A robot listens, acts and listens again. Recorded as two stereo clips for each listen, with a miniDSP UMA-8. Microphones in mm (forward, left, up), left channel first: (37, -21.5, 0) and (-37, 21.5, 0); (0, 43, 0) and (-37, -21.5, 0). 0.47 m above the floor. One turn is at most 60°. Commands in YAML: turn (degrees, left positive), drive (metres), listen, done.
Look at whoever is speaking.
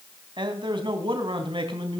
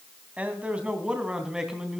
turn: 60
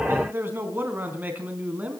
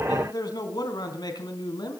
turn: 60
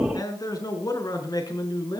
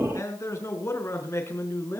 turn: 10
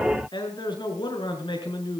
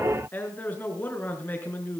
done: "Facing the man speaking, over 4 m away."